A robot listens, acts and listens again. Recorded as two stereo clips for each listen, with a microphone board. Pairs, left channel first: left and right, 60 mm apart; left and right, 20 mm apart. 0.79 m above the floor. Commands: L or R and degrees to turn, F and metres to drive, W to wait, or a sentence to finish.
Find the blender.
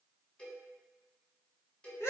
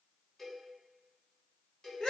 W
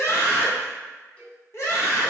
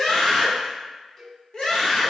W
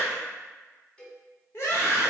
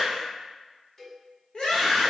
I can't make out a blender to turn to.